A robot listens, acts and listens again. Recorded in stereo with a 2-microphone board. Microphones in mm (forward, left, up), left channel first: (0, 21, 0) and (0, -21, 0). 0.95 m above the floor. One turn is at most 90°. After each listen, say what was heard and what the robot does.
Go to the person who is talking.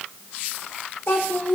The child speaking: about 50° left or 130° left. Turn 50° left.
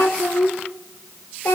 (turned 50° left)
So it is at 80° left. Turn 80° left.
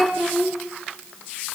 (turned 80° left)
Drive 1.0 m forward.
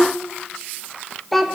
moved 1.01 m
Drive 1.0 m forward.
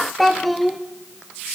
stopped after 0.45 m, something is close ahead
Arrived at the child speaking, straight ahead.